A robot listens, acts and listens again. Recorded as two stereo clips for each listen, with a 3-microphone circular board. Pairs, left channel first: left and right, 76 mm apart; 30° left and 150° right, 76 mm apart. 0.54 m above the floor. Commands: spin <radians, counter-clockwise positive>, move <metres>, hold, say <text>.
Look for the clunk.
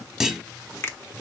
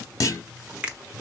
say Facing the clunk, under 1 m away.